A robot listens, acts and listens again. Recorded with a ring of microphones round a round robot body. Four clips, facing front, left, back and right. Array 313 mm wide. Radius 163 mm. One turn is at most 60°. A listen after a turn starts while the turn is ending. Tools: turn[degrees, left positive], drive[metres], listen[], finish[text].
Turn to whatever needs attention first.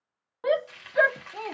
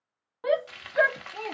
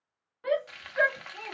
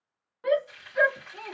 Thought: The shout: 25° left.
Action: turn[25]
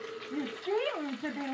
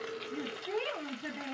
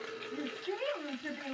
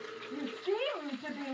Thought: The shout is now 10° right.
Action: turn[-10]
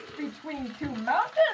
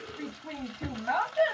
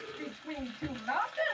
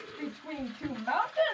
Action: finish[Facing the shout.]